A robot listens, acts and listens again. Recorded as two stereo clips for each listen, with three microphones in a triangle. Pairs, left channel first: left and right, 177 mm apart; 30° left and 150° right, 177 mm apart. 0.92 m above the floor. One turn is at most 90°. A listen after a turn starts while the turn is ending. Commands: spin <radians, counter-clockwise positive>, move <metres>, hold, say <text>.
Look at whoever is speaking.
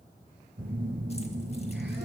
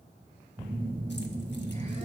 hold
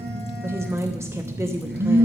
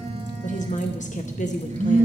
spin -0.26
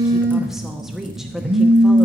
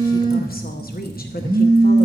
say Facing the woman speaking.